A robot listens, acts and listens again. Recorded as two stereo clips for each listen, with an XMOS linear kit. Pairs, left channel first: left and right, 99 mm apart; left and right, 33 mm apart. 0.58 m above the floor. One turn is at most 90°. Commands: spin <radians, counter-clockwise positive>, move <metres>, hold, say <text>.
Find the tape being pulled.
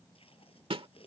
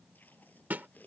spin 1.22
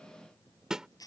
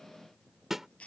spin 0.70
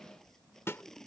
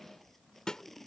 say Facing the tape being pulled.